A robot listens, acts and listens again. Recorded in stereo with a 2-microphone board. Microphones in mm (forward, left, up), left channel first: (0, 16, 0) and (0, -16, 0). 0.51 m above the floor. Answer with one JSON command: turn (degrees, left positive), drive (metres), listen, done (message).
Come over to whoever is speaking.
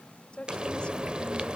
{"turn": 30}
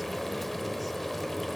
{"listen": true}
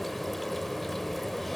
{"listen": true}
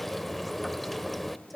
{"drive": 1.0}
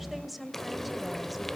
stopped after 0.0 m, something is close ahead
{"done": "Blocked. The woman speaking is further on, straight ahead."}